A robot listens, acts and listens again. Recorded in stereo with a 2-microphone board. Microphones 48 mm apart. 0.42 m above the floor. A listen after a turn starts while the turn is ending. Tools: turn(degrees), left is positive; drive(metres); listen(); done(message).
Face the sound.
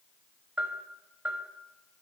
turn(degrees=-30)
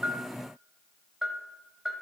done("Found it: a bell, straight ahead, under 1 m away.")